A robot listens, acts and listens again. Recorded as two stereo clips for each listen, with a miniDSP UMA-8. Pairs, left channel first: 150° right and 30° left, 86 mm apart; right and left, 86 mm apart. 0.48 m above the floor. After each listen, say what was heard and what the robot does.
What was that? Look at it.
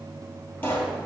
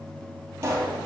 The pop: 150° left. Turn 150° left.
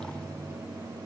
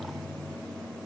Facing where the pop came from. I can't hear it now.